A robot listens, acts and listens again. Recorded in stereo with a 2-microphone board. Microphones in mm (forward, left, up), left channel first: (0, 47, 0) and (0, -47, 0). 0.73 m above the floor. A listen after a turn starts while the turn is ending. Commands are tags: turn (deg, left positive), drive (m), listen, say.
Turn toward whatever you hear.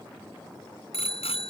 <turn deg="90"/>
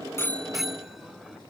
<say>Facing the bicycle bell.</say>